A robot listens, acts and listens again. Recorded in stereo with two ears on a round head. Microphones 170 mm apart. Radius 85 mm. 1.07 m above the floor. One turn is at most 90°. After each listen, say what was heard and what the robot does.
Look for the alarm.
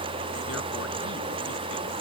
Keep listening.
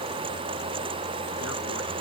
Keep listening.
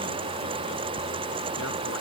I can't make out an alarm.